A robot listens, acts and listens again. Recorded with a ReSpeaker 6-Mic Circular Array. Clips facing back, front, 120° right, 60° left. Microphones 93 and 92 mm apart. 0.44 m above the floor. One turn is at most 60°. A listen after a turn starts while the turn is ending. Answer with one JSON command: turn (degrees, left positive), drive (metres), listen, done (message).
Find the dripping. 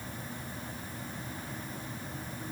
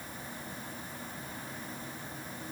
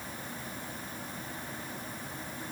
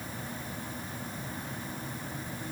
{"listen": true}
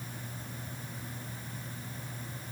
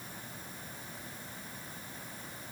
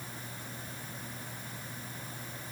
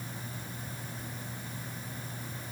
{"listen": true}
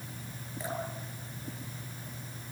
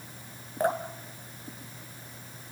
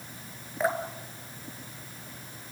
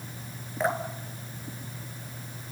{"turn": -30}
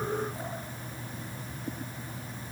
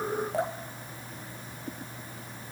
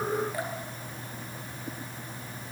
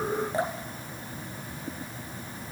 {"done": "Facing the dripping, 1 to 2 m away."}